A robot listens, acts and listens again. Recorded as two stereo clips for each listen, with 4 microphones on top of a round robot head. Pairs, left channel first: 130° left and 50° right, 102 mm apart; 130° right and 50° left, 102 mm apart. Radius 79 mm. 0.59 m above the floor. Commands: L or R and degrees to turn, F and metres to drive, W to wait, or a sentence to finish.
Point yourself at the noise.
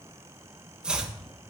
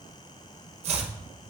L35
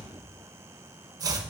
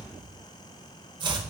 Found it: chopping, straight ahead, 1 to 2 m away.